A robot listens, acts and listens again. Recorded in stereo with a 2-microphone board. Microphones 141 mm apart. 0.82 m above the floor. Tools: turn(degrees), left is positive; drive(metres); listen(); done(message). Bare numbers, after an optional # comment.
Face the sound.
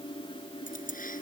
# The keys jangling: about 75° left or 105° left.
turn(75)
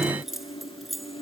done("Facing the keys jangling.")